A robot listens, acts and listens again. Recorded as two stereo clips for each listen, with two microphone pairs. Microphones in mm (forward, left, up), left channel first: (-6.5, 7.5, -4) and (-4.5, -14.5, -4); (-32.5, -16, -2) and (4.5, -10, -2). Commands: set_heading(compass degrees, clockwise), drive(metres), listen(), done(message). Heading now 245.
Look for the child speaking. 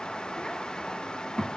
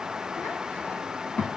set_heading(90)
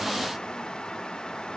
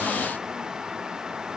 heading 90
listen()
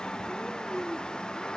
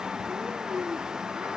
set_heading(45)
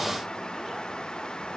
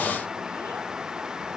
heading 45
listen()
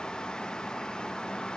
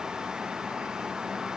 listen()
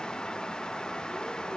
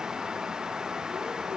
done("Facing where the child speaking came from. I can't hear it now.")